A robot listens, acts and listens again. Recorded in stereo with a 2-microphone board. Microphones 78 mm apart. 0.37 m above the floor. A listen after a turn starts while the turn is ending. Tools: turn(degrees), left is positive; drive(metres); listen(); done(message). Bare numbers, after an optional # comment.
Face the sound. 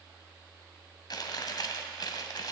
# The chewing: about 65° left or 115° left.
turn(65)
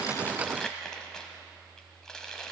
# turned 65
# So it is at 10° left.
turn(10)
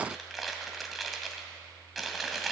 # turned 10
done("Facing the chewing.")